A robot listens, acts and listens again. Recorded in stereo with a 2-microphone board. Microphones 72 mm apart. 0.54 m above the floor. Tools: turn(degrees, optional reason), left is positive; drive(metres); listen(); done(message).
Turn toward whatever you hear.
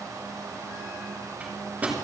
turn(degrees=-20, reason="The microwave: about 20° right or 160° right.")
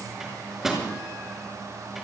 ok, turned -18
done("Facing the microwave.")